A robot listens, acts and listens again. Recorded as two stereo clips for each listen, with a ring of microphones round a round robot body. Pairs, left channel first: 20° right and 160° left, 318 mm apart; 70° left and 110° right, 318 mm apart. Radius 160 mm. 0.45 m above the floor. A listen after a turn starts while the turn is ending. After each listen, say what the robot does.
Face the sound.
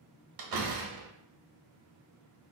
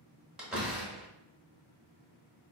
Turn 160° left.
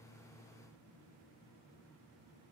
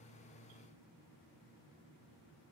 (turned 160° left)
I heard a door slam from this way, but can't make it out now.